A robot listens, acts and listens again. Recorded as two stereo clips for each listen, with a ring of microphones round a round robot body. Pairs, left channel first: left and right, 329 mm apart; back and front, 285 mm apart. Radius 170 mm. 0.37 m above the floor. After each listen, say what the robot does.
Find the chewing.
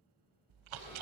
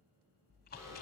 Turn 115° right.
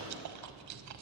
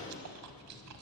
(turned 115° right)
Turn 45° right.
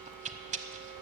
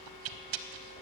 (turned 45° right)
Turn 20° right.
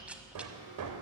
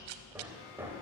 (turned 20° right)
Facing the chewing.